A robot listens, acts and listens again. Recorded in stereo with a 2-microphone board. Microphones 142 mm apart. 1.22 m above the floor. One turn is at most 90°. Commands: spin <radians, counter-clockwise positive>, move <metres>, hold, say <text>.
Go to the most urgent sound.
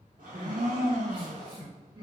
spin -0.52
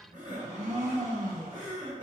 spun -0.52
spin -1.57
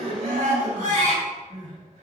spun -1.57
spin -1.05
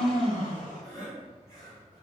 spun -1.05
spin 0.44
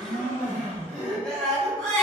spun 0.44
move 1.0
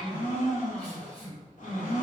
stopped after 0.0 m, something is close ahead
spin 0.17
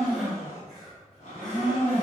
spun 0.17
hold
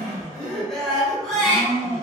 say Blocked. The crying is further on, straight ahead.